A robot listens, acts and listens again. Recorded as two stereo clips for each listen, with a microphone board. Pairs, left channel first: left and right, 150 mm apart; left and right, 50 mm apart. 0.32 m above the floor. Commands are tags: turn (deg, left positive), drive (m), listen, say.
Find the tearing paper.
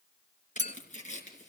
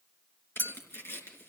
<turn deg="55"/>
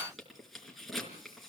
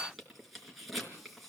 <say>Facing the tearing paper, over 4 m away.</say>